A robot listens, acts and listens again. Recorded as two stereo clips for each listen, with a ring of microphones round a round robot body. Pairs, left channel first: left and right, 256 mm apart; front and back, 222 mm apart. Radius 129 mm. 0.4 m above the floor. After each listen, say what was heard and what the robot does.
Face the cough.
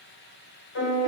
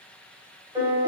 Keep listening.
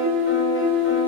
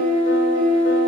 Keep listening.
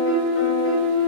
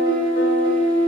I can't make out a cough to turn to.